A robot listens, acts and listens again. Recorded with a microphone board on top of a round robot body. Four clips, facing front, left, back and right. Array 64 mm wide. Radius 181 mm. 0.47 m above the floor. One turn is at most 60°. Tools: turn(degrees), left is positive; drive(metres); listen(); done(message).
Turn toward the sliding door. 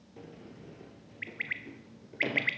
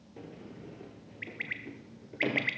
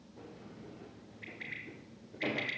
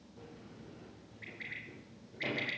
turn(degrees=60)
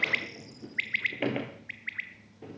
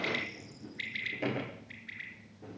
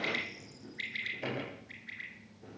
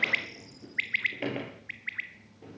turn(degrees=-10)
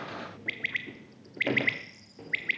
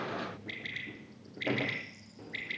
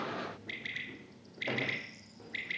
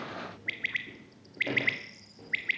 done("Found it: a sliding door, straight ahead, 2 to 4 m away.")